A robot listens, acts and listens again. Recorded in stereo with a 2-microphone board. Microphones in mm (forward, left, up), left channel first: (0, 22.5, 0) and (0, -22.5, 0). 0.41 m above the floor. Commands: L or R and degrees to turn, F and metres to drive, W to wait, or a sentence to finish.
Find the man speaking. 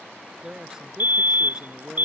R30
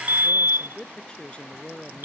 L25
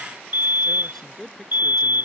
L10
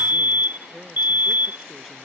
W
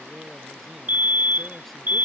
W
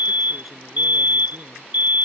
Facing where the man speaking came from. I can't hear it now.